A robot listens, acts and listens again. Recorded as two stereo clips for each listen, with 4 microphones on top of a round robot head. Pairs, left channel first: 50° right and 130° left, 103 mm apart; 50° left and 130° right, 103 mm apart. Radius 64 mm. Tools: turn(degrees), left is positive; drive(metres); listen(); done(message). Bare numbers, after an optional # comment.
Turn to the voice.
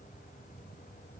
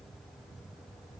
listen()
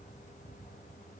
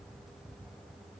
listen()
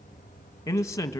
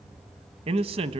# The man speaking: 110° right.
turn(-110)
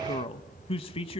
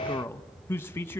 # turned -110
# The man speaking is now 20° right.
turn(-20)
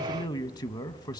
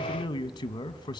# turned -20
done("Facing the man speaking.")